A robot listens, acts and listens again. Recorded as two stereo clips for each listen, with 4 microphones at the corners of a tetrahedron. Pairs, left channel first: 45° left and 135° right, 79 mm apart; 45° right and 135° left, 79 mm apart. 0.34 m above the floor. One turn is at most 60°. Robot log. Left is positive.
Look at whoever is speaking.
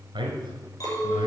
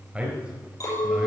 note: The man speaking: 150° right.
cmd yaw -60
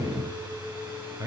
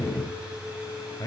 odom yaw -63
note: The man speaking is now 90° right.
cmd yaw -60
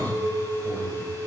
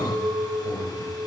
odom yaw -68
note: Nothing new. It was at 20° right.
cmd yaw -20
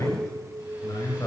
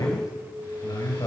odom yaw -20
end: Facing the man speaking, over 4 m away.